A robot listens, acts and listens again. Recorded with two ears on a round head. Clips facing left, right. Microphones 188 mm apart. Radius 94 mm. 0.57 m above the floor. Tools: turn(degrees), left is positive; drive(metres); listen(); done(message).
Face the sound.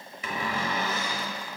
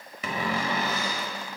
turn(degrees=-55)
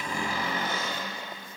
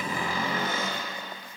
turn(degrees=-70)
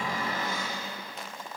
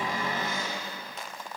turn(degrees=-20)
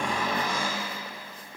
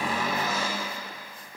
done("Found it: a cupboard door, straight ahead, 1 to 2 m away.")